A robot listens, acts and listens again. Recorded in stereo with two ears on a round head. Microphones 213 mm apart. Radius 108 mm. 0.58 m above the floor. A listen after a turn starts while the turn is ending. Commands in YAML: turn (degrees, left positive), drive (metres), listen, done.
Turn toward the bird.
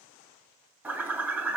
turn: -30
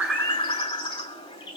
turn: 20
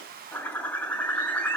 turn: 10
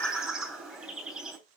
done: "Found it: a bird, straight ahead, 2 to 4 m away."